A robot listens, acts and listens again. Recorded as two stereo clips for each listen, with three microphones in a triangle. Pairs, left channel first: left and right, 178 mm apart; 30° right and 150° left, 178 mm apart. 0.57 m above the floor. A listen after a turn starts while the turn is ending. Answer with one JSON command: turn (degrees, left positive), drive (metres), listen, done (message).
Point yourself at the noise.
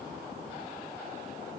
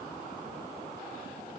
{"listen": true}
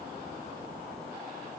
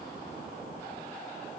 {"listen": true}
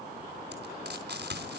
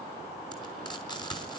{"turn": -95}
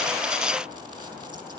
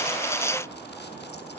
{"listen": true}
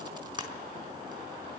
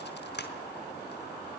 {"turn": -25}
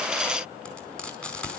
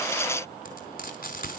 {"done": "Found it: frying, straight ahead."}